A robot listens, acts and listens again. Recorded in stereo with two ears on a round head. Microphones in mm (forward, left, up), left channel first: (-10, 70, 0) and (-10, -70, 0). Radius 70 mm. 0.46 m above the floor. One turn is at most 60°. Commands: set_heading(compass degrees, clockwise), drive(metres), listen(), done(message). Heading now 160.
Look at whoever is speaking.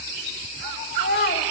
set_heading(100)
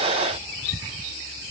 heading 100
listen()
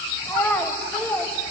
set_heading(85)
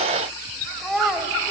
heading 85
done("Facing the child speaking.")